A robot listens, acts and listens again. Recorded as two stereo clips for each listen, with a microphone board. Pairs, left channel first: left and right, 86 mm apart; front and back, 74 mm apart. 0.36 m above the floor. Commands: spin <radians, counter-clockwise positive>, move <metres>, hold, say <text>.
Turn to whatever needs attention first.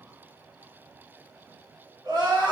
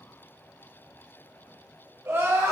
spin -2.09
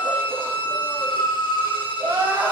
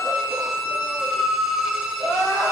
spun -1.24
spin -0.96
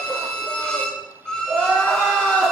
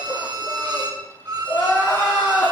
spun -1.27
spin 0.35
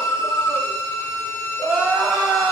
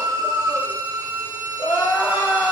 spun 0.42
say Facing the crying.